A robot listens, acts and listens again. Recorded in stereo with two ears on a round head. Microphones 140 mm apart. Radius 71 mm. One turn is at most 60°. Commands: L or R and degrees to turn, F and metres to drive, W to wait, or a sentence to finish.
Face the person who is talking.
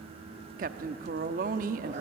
R55
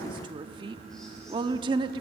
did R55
R35
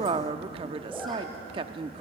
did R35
R40
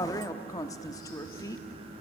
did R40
L25
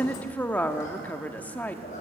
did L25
L10
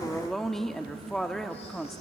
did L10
Found it: a woman speaking, straight ahead.